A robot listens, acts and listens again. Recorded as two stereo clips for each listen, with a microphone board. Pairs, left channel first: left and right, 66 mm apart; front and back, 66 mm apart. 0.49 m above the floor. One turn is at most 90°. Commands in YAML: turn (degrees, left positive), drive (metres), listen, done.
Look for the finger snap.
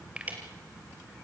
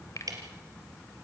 turn: -20
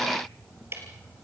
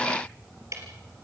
listen: true
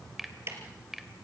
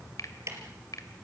done: "Facing the finger snap."